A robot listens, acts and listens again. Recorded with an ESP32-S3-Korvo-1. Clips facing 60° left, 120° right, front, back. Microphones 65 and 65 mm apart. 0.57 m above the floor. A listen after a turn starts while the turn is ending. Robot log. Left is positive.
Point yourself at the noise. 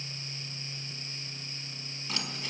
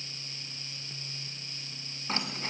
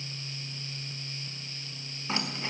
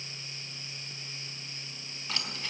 note: The keys jangling: 65° right.
cmd yaw -65
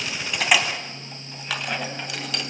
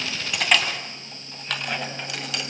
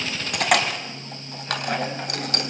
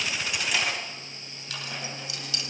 note: The keys jangling is now 30° right.
cmd yaw -30
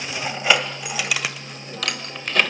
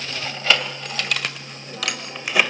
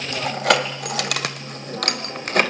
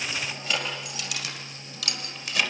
note: The keys jangling is now 40° right.
cmd yaw -40
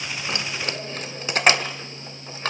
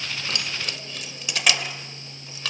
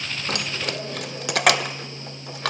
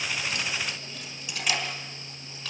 note: The keys jangling is now 10° left.
cmd yaw +10
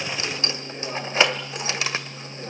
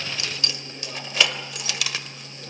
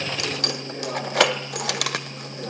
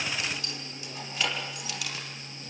end: Found it: keys jangling, straight ahead.